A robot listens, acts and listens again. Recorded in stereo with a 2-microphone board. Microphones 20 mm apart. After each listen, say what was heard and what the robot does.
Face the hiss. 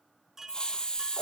The hiss: about 50° left or 130° left. Turn 50° left.
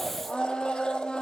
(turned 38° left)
Keep listening.
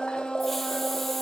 Keep listening.
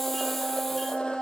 I heard a hiss, but can't make it out now. It was about 10° left or 95° left.